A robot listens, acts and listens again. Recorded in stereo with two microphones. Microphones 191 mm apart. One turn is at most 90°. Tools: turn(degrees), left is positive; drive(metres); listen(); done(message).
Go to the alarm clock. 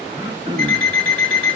turn(degrees=30)
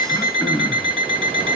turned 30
turn(degrees=-30)
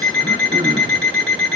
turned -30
drive(metres=1.0)
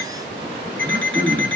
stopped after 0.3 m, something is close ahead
done("Blocked. The alarm clock is further on, straight ahead.")